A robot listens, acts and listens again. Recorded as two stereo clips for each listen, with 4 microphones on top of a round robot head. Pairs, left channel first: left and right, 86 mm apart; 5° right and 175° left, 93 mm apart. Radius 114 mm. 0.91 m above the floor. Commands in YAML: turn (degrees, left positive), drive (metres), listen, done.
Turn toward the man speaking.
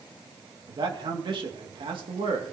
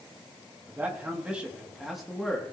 turn: -90
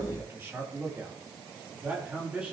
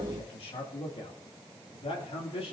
turn: -10
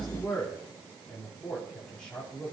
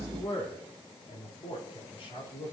turn: 10
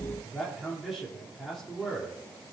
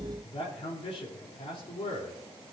done: "Facing the man speaking, 2 to 4 m away."